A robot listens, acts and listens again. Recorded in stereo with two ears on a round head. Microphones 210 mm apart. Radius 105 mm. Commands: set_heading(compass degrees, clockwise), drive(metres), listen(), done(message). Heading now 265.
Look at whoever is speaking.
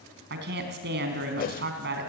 set_heading(310)
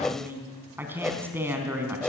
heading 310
set_heading(320)
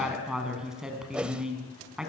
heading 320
done("Facing the woman speaking, 2 to 4 m away.")